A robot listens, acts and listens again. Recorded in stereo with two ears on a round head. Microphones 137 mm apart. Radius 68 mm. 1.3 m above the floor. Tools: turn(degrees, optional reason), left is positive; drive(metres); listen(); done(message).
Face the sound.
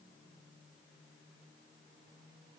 listen()
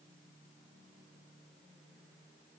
listen()
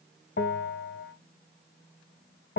turn(degrees=65, reason="The bell: about 65° left or 115° left.")
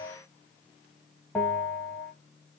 done("Found it: a bell, straight ahead, 1 to 2 m away.")